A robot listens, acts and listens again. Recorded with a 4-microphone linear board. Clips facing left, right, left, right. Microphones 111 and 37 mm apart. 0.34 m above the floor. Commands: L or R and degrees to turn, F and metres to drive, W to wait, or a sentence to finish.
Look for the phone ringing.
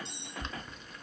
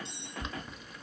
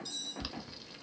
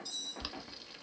W
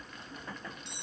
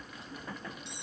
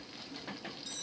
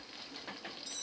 W
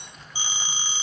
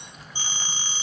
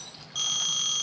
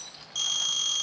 L30
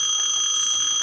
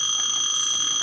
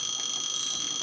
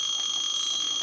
R20
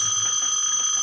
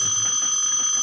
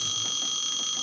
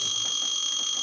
Facing the phone ringing.